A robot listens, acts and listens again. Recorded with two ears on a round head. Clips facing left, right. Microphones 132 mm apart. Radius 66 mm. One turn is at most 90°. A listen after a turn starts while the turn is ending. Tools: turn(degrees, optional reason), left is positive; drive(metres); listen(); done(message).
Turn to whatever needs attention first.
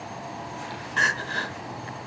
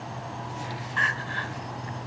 turn(degrees=50, reason="The crying: about 50° left or 130° left.")
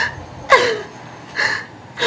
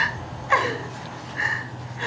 turn(degrees=85, reason="So it is at 85° left.")
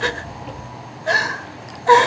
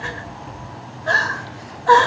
turn(degrees=15, reason="The crying is now 15° left.")
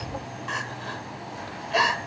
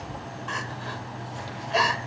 done("Facing the crying, 1 to 2 m away.")